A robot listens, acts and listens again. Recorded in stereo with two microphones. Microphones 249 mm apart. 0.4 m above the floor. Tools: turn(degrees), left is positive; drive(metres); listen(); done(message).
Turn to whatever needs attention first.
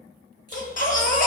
turn(degrees=35)
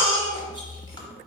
turn(degrees=105)
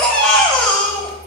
done("Found it: a baby crying, straight ahead.")